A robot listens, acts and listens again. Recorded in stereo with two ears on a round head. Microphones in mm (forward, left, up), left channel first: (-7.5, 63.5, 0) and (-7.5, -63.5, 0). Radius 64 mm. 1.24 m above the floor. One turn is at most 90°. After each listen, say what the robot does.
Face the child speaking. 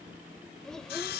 Turn 30° left.
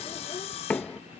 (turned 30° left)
Keep listening.
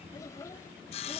Turn 90° left.
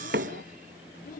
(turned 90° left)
Turn 65° left.
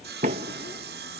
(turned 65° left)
Keep listening.
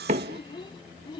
Turn 35° left.
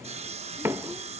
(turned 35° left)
Keep listening.
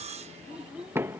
Facing the child speaking.